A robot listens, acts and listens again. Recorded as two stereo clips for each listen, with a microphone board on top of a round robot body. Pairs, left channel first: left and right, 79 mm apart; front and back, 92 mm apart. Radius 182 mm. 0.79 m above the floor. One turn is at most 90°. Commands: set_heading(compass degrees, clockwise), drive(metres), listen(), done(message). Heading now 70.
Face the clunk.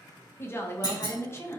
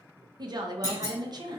set_heading(15)
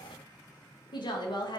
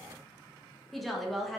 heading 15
done("I heard a clunk from this way, but can't make it out now.")